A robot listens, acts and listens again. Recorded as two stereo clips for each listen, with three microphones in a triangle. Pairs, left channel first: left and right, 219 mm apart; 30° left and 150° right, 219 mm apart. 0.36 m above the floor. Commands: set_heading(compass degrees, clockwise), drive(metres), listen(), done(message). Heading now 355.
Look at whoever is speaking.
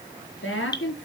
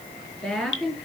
set_heading(240)
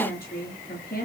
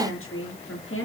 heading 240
set_heading(195)
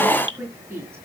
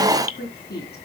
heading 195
set_heading(205)
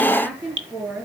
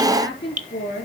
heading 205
done("Facing the woman speaking.")